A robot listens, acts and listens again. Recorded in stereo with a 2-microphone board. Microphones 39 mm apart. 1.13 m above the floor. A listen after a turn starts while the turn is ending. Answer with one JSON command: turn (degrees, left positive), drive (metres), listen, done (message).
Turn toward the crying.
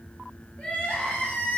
{"turn": 35}
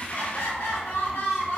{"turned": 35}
{"turn": 110}
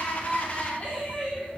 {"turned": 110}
{"turn": 30}
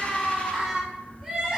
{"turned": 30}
{"turn": -15}
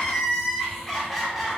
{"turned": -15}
{"done": "Found it: crying, straight ahead, under 1 m away."}